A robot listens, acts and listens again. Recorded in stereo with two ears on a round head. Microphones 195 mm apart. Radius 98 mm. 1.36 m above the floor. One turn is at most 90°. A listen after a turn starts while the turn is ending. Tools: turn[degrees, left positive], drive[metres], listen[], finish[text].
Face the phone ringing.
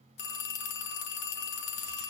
Thought: The phone ringing: about 50° left or 130° left.
Action: turn[50]
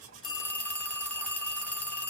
Action: finish[Facing the phone ringing.]